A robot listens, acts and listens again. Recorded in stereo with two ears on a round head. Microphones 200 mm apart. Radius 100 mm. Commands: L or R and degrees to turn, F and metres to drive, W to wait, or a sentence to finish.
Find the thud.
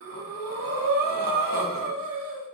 W
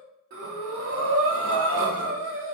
W
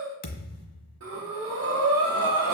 L40
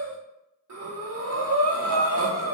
W
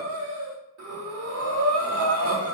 I heard a thud, but can't make it out now. It was about straight ahead or 100° left.